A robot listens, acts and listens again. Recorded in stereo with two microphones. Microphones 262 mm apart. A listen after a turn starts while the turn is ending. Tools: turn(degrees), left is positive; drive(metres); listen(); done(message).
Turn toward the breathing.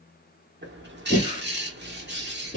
turn(degrees=30)
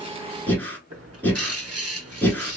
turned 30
done("Facing the breathing.")